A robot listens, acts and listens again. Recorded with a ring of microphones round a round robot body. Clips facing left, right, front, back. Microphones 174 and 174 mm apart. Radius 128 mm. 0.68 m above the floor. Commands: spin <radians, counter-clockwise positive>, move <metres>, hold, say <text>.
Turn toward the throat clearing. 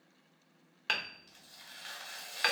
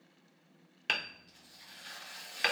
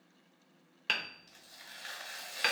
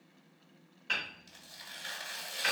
hold
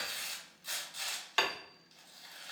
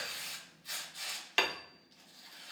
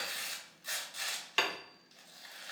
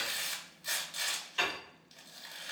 hold
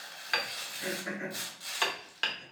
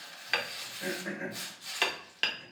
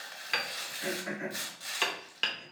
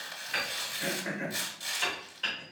spin -2.44
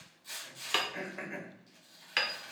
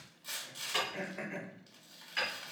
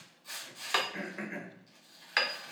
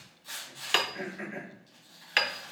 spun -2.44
say Found it: throat clearing, straight ahead.